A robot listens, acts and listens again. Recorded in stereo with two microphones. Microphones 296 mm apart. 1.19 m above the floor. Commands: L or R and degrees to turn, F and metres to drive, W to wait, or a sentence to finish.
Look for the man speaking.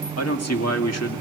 L55
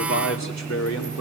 L65
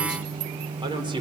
R15
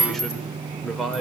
Facing the man speaking, over 4 m away.